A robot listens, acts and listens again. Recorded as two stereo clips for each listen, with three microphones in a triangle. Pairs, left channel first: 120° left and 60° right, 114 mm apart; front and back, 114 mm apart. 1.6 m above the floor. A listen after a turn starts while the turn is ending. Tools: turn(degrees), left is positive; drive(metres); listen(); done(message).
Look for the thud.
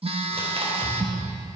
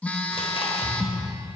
turn(degrees=65)
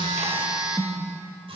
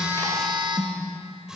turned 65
done("Facing where the thud came from. I can't hear it now.")